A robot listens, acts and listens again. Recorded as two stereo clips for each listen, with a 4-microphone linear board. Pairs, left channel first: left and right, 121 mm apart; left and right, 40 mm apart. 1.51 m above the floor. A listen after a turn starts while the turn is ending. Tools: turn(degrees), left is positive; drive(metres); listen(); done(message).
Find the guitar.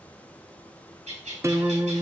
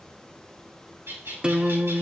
turn(degrees=-25)
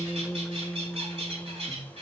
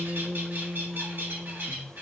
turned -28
done("Found it: a guitar, straight ahead, under 1 m away.")